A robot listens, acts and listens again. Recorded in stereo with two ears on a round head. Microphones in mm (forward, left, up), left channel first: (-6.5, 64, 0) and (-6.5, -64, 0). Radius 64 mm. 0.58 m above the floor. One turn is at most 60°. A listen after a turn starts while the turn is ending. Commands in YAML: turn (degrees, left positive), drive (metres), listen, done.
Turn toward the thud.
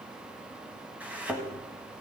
turn: -30
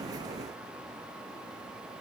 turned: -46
listen: true
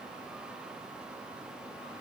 done: "I heard a thud, but can't make it out now. It was about 35° left or 125° right."